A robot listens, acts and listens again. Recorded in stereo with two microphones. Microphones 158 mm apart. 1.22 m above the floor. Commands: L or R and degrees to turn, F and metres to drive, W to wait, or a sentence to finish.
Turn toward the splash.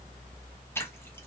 L15
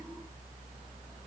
W
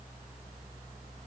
I heard a splash, but can't make it out now. It was about straight ahead or 150° left.